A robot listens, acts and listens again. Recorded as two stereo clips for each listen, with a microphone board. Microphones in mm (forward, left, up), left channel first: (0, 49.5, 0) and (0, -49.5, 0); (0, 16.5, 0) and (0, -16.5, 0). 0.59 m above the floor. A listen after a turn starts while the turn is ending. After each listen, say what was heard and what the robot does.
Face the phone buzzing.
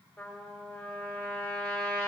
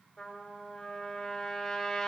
Keep listening.
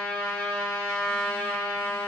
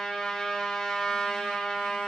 Keep listening.
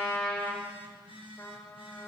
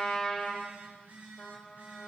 The phone buzzing: about 60° right or 120° right. Turn 60° right.
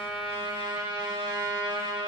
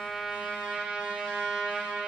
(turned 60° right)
Keep listening.
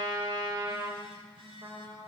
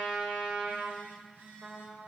So it is at 60° right. Turn 60° right.
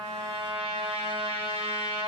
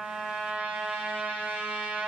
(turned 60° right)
Keep listening.
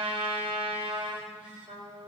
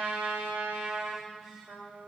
The phone buzzing is now 10° right. Turn 10° right.
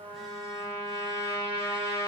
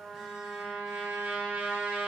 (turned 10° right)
Keep listening.
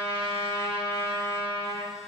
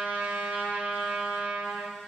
Keep listening.
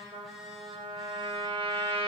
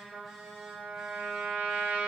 Facing where the phone buzzing came from. I can't hear it now.